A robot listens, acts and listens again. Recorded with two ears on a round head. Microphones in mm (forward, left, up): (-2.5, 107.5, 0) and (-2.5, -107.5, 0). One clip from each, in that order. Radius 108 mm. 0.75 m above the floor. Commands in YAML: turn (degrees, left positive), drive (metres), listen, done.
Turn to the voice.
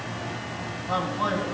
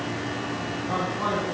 turn: 60
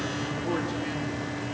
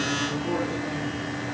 listen: true
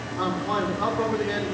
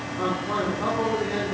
turn: 65
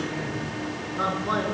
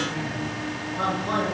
turn: 20
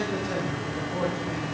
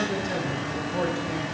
done: "Facing the man speaking."